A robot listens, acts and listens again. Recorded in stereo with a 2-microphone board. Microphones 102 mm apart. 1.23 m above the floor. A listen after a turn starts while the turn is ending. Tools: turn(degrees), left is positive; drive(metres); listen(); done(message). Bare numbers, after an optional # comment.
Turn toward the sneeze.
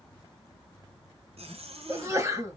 # The sneeze: about 30° right or 150° right.
turn(-30)
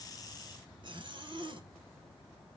listen()
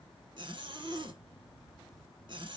done("I heard a sneeze, but can't make it out now. It was about straight ahead or 120° right.")